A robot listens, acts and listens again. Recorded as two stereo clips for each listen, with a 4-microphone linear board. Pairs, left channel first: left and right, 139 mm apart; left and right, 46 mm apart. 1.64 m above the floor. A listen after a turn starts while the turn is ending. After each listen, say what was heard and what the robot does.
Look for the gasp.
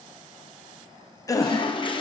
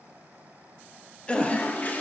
The gasp: about 25° left or 155° left. Turn 25° left.
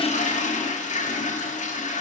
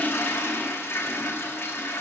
Keep listening.
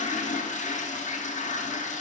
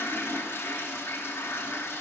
I heard a gasp, but can't make it out now. It was about straight ahead or 130° left.